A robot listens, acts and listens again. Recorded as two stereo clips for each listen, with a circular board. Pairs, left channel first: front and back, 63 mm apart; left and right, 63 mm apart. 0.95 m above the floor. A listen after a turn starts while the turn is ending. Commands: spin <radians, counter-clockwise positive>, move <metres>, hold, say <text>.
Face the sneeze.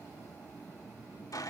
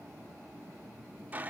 hold
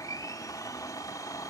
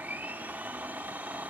hold
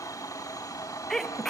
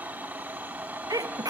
spin -1.48
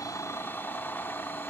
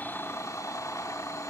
say I heard a sneeze from this way, but can't make it out now.